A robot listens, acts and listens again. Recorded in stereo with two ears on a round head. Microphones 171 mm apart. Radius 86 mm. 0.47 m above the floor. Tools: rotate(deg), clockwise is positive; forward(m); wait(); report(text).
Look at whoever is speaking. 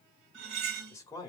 rotate(-20)
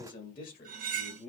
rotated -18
rotate(-125)
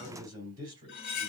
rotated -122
rotate(25)
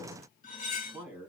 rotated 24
rotate(10)
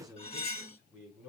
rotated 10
report("Facing the man speaking.")